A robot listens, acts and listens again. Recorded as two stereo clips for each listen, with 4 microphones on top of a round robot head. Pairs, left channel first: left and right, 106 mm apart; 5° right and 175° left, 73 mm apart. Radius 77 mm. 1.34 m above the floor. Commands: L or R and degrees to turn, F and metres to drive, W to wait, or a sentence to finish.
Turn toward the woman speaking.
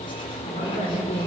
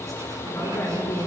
L50
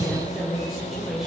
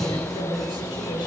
Found it: a woman speaking, straight ahead.